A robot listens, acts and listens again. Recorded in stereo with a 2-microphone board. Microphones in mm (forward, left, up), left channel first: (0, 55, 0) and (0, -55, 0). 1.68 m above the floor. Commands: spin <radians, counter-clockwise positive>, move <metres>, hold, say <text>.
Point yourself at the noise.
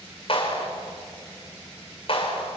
spin 1.05
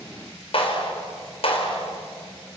spin 1.05
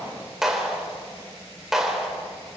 say Facing the clap.